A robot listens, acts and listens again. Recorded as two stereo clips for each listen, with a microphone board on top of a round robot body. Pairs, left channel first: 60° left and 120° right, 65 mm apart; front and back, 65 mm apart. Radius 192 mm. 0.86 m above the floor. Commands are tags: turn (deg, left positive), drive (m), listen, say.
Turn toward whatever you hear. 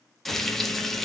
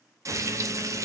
<turn deg="145"/>
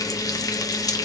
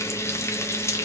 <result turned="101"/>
<turn deg="40"/>
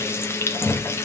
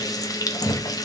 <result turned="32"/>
<turn deg="10"/>
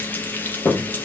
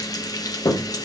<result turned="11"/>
<say>Facing the frying.</say>